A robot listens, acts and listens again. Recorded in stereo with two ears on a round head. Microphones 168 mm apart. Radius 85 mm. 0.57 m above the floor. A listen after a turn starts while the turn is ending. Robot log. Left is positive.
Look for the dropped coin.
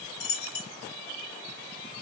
note: The dropped coin: about 65° left or 115° left.
cmd yaw +65
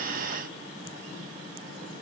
cmd idle
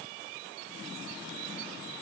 end: I heard a dropped coin, but can't make it out now. It was about straight ahead or 50° left.